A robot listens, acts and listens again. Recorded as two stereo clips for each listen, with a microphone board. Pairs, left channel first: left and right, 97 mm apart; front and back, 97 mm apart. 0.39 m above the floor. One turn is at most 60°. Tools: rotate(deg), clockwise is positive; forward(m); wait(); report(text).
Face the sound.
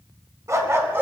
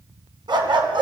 rotate(60)
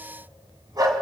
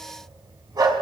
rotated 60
rotate(60)
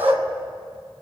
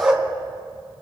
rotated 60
rotate(60)
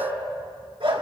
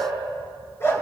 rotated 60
rotate(60)
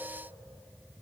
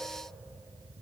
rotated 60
wait()
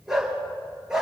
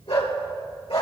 report("Facing the dog barking.")